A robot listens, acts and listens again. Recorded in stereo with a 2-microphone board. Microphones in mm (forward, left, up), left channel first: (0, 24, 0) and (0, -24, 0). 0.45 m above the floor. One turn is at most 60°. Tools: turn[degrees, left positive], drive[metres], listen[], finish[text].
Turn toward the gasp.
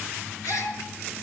Action: turn[60]
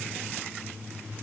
Thought: Nothing new. It was at 30° left.
Action: turn[30]
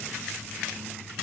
Action: finish[Facing where the gasp came from. I can't hear it now.]